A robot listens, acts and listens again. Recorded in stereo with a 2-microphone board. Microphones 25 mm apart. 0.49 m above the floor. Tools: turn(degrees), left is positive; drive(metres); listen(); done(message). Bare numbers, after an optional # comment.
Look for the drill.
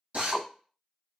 # The drill: about 55° right or 125° right.
turn(-55)
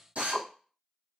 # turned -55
# So it is at 70° right.
turn(-70)
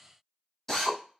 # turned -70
# The drill is now 10° left.
turn(10)
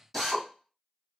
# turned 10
done("Facing the drill.")